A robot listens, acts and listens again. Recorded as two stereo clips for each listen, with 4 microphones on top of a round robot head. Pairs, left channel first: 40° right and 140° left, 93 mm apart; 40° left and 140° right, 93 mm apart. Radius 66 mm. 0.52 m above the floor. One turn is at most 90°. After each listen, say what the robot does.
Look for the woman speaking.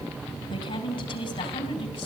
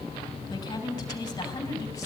Turn 15° right.
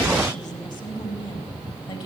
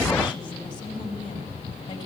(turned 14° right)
Found it: a woman speaking, straight ahead, over 4 m away.